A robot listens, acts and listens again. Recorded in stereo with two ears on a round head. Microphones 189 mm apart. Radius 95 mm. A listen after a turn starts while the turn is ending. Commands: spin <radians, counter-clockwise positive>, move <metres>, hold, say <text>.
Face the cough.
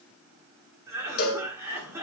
spin -0.52
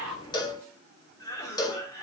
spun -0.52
spin 0.35
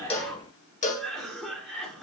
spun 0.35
say Facing the cough, 2 to 4 m away.